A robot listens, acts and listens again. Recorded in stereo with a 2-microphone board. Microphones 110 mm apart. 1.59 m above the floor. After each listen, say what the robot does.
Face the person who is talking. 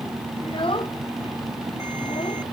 Turn 50° left.
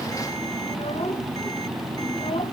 Keep listening.
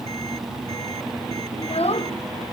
Turn 75° left.
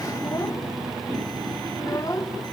Turn 35° left.
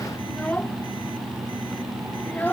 Turn 15° left.
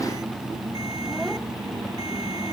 Keep listening.
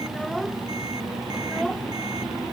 Facing the child speaking.